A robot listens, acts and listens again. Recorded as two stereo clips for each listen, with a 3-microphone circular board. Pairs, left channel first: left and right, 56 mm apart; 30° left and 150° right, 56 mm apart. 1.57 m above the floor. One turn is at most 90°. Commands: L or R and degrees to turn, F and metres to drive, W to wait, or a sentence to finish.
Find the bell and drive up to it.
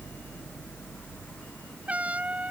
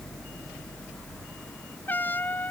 W
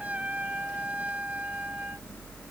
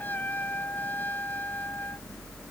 W
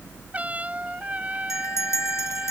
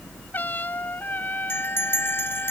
L70
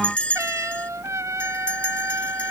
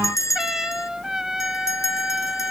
L25
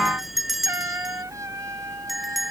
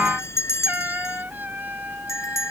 F1.0
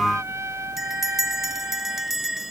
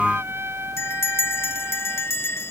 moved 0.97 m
F1.0
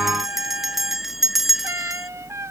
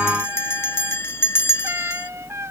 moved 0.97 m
F1.0
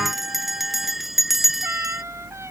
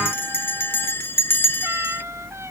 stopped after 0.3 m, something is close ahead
I am next to the bell.